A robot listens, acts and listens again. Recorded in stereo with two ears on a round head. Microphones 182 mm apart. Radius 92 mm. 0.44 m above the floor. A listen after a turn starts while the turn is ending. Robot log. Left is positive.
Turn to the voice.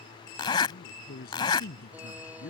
note: The man speaking: about 50° left or 130° left.
cmd yaw +50
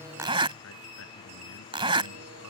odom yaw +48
cmd idle
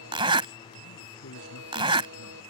note: So it is at 80° left.
cmd yaw +80
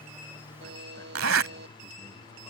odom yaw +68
note: Nothing new. It was at 15° left.
cmd yaw +15
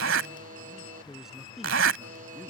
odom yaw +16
end: Facing the man speaking.